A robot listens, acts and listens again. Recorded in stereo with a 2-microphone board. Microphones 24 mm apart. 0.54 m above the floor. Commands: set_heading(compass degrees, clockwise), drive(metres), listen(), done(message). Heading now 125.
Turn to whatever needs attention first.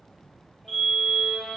set_heading(90)
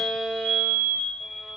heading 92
set_heading(347)
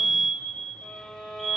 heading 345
done("Found it: a fire alarm, straight ahead, 2 to 4 m away.")